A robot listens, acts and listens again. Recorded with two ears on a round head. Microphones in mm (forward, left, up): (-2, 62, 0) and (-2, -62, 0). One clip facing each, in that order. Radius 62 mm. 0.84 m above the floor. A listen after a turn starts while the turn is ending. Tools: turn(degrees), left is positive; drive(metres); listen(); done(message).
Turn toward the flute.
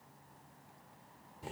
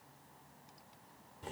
listen()
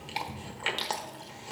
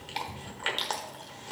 listen()
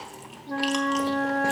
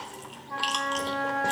turn(degrees=50)
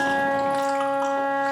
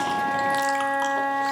done("Facing the flute.")